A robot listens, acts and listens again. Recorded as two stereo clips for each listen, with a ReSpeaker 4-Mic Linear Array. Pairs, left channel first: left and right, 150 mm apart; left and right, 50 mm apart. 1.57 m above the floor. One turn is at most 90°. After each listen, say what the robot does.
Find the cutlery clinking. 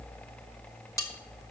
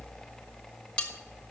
Turn 20° left.
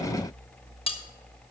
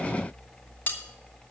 Turn 90° left.
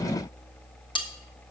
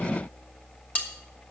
Turn 35° left.
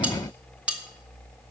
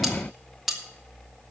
Turn 10° right.
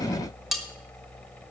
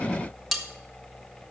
Facing the cutlery clinking.